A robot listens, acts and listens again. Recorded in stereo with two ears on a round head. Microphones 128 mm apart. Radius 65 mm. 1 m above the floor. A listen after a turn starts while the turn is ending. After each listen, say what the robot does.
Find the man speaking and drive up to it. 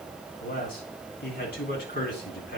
Turn 70° left.
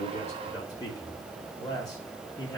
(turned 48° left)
Turn 25° left.
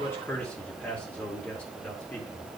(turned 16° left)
Turn 10° left.
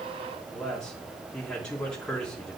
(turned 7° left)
Drive 1.0 m forward.
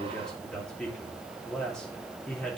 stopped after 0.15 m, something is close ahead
Blocked. The man speaking is further on, straight ahead.